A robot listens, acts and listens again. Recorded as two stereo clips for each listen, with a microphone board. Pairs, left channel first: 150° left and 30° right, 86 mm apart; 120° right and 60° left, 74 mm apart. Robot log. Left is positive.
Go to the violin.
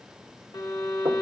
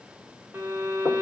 note: The violin: 125° left.
cmd yaw +125
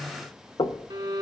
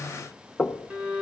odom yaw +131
note: The violin is now 10° right.
cmd yaw -10
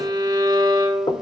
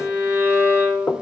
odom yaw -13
cmd fwd 1.0
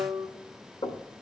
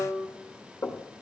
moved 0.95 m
cmd fwd 1.0
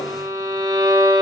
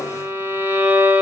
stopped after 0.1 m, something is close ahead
end: I am next to the violin.